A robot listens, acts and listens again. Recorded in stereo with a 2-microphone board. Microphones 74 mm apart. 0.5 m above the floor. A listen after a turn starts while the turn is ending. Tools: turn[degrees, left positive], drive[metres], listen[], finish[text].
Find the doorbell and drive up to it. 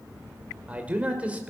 Action: listen[]
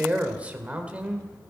Action: listen[]
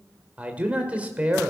Action: finish[I can't make out a doorbell to turn to.]